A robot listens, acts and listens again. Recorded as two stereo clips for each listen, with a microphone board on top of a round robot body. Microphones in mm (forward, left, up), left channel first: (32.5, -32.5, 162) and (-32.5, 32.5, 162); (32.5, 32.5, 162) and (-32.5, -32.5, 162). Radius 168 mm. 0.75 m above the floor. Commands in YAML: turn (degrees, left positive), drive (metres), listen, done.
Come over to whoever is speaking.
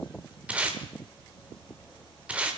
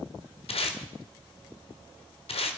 listen: true
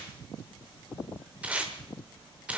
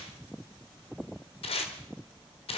listen: true
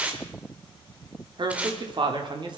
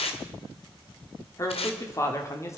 turn: 105
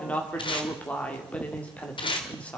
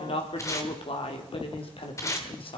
turn: 30
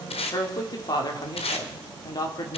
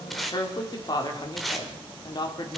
drive: 1.0
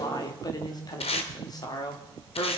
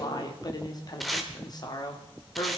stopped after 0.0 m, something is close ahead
done: "Blocked. The woman speaking is further on, straight ahead."